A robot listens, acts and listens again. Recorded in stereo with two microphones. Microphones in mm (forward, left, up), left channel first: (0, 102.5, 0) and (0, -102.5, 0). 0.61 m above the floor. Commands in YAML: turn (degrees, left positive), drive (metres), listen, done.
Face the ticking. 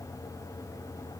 listen: true
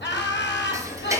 turn: -30
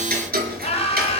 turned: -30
turn: -130
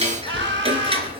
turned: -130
turn: -30
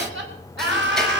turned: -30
listen: true
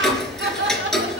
done: "Facing the ticking, 2 to 4 m away."